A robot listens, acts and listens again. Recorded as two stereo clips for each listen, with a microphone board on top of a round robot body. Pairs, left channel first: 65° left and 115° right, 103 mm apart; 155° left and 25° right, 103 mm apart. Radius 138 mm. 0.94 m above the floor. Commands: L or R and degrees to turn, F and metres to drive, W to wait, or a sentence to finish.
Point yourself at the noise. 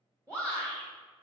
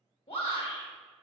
R170
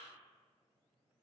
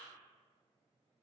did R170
W
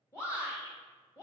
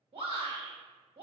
Facing the shout.